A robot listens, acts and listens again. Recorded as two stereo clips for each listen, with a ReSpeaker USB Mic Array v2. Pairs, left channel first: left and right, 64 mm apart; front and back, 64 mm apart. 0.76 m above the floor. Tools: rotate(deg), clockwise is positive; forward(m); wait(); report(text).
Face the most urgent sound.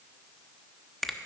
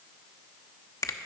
wait()
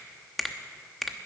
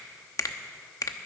wait()
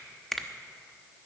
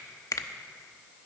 report("I can't make out anything urgent, only a finger snap.")